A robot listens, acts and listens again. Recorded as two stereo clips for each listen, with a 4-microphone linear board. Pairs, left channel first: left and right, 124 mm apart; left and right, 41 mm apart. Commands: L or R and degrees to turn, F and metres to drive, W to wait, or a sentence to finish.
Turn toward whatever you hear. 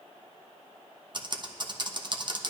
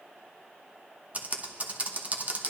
R35
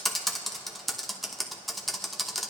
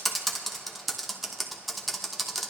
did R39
Found it: typing on a keyboard, straight ahead, under 1 m away.